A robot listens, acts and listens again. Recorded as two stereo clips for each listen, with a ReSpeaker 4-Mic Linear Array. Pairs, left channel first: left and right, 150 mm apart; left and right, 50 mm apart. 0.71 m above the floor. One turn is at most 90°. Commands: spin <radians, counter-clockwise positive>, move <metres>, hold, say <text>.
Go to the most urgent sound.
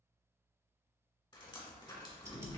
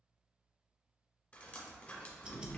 hold
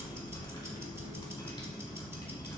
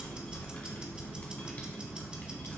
hold
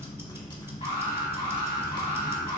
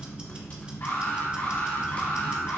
spin 1.05
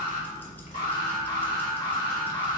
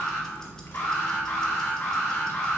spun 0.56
spin 1.40
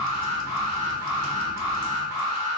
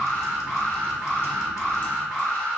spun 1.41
move 1.0
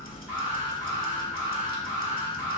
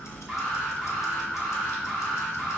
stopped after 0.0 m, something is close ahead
say Blocked. The alarm is further on, straight ahead.